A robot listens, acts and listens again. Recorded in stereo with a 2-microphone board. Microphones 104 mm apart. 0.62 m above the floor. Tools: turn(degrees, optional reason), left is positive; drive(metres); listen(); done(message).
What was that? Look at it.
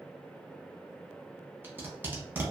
turn(degrees=-20, reason="The tape being pulled: about 20° right or 160° right.")
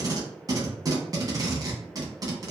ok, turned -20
turn(degrees=-135, reason="So it is at 135° right.")
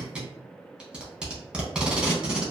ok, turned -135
turn(degrees=-10, reason="The tape being pulled is now 10° right.")
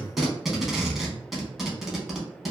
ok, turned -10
done("Facing the tape being pulled.")